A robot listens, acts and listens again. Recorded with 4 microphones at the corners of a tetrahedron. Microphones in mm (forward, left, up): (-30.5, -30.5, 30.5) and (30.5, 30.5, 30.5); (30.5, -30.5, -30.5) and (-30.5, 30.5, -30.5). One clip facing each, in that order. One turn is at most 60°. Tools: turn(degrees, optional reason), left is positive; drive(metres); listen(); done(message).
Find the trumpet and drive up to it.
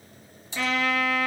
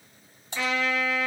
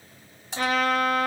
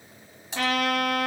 turn(degrees=60, reason="The trumpet: 130° left.")
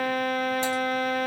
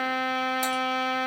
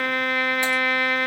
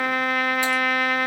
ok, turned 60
turn(degrees=50, reason="The trumpet is now 50° left.")
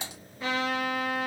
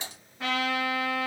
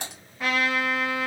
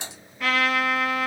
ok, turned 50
turn(degrees=25, reason="The trumpet is now 25° left.")
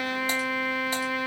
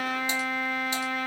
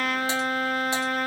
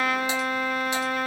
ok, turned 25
drive(metres=1.0)
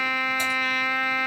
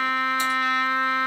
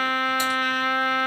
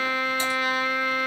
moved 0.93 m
turn(degrees=-10, reason="The trumpet is now 10° right.")
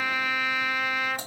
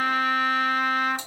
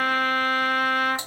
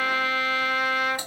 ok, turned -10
drive(metres=1.0)
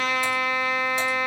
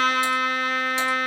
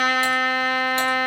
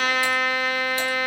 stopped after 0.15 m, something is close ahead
done("Arrived at the trumpet, straight ahead.")